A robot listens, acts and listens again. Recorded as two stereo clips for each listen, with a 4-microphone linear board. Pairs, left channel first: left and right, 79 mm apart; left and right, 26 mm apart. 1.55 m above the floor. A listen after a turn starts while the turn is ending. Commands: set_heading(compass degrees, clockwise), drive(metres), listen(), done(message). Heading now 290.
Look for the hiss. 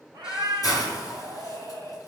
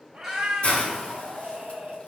set_heading(240)
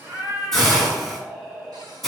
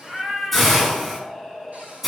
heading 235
done("Facing the hiss, over 4 m away.")